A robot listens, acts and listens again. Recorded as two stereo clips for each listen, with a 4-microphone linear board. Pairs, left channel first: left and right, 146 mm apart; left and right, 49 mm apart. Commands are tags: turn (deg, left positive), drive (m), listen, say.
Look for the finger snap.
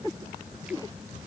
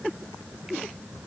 <listen/>
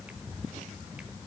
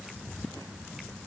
<listen/>
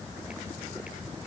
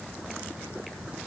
<say>I can't make out a finger snap.</say>